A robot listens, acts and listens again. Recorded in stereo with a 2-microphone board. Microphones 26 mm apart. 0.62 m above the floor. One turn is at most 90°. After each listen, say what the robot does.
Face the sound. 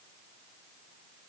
Keep listening.
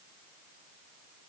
Keep listening.
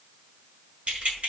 Turn 50° right.
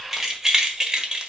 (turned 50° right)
Turn 30° right.
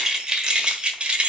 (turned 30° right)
Turn 40° right.
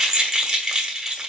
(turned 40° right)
Turn 15° right.
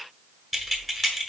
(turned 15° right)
Found it: keys jangling, straight ahead, 1 to 2 m away.